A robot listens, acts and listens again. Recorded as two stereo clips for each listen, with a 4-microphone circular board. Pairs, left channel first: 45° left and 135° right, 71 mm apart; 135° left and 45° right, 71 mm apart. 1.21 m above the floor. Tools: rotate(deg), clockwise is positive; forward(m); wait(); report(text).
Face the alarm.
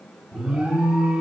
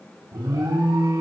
rotate(60)
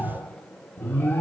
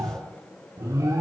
rotate(15)
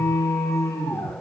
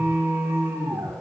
report("Found it: an alarm, straight ahead.")